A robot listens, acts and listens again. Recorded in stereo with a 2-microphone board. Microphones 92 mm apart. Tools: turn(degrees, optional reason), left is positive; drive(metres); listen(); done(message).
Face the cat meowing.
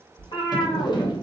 turn(degrees=65, reason="The cat meowing: about 65° left or 115° left.")
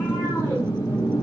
listen()
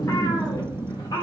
turn(degrees=45, reason="So it is at 45° left.")
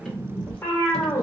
turn(degrees=25, reason="The cat meowing is now 25° left.")
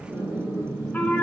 turn(degrees=10, reason="The cat meowing is now 10° left.")
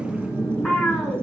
done("Found it: a cat meowing, straight ahead.")